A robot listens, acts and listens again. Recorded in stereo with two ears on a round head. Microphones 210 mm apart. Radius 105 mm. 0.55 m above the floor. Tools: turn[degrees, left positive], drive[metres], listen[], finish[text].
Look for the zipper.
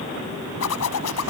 Action: turn[90]
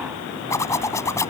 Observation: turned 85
Thought: So it is at 15° left.
Action: turn[15]
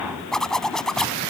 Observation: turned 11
Action: finish[Facing the zipper.]